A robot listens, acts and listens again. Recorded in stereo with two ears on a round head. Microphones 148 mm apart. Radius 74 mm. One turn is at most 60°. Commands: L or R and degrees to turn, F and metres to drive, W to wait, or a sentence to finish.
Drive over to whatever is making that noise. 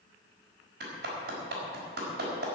R60
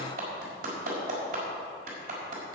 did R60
R55
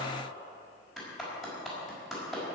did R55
F1.0
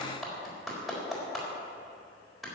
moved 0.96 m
F1.0
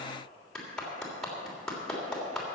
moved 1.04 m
F1.0
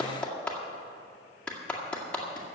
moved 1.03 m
F1.0
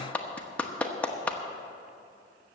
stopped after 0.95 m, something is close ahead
L10
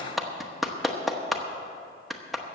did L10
I am next to the clap.